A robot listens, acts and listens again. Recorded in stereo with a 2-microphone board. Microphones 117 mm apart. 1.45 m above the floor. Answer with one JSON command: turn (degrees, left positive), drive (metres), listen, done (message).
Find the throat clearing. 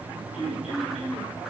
{"turn": 90}
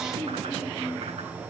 {"done": "Found it: throat clearing, straight ahead."}